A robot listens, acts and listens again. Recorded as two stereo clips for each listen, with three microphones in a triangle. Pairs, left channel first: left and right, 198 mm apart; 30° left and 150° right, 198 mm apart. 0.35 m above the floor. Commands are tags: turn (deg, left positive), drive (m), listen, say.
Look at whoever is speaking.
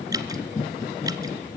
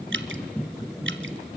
<listen/>
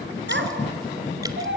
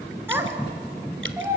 <turn deg="-75"/>
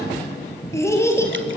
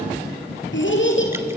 <turn deg="15"/>
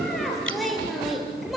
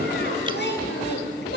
<say>Found it: a child speaking, straight ahead, over 4 m away.</say>